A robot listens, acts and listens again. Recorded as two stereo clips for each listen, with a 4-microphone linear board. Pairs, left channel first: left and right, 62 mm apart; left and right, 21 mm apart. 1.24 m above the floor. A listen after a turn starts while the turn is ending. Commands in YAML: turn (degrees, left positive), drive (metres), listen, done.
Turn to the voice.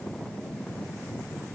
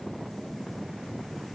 listen: true
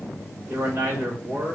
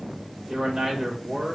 turn: -40
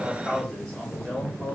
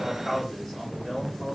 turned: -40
done: "Facing the man speaking."